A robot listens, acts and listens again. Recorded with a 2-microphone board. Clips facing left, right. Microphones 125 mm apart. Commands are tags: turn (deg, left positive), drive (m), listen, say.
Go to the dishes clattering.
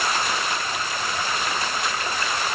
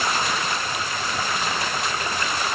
<listen/>
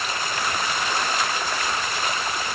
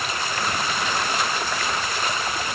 <listen/>
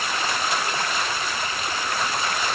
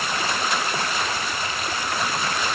<say>I can't make out dishes clattering.</say>